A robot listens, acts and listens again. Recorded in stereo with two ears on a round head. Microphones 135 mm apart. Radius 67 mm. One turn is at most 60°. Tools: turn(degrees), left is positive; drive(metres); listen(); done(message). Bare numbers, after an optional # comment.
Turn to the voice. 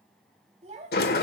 # The child speaking: about 45° right or 135° right.
turn(-45)
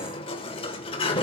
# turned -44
listen()
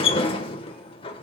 listen()
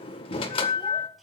done("I heard a child speaking, but can't make it out now. It was about straight ahead or 90° right.")